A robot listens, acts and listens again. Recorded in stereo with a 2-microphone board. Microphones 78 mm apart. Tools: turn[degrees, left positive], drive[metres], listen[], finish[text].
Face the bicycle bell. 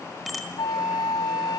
Action: turn[30]
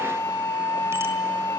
Action: listen[]
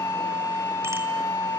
Action: listen[]
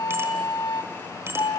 Thought: So it is at 35° right.
Action: turn[-35]
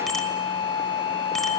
Action: listen[]
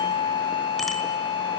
Action: listen[]
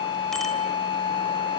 Action: finish[I heard a bicycle bell from this way, but can't make it out now.]